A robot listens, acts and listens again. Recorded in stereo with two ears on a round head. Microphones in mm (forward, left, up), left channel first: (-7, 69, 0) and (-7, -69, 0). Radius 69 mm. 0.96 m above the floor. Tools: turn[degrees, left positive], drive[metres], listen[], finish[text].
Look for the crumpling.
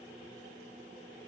Action: listen[]
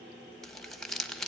Action: turn[30]
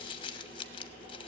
Thought: So it is at 145° left.
Action: turn[145]
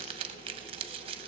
Thought: The crumpling is now 35° right.
Action: turn[-35]
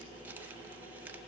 Thought: The crumpling is now 10° right.
Action: turn[-10]
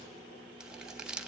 Action: finish[Found it: crumpling, straight ahead.]